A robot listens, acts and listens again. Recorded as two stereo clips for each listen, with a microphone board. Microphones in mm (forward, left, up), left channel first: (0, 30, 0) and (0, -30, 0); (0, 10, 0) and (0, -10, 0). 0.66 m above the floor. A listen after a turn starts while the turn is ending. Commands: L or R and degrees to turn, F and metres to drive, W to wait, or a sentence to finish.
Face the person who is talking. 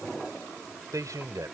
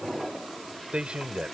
R65
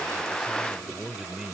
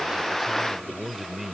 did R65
R10
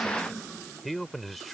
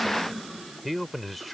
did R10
Facing the man speaking.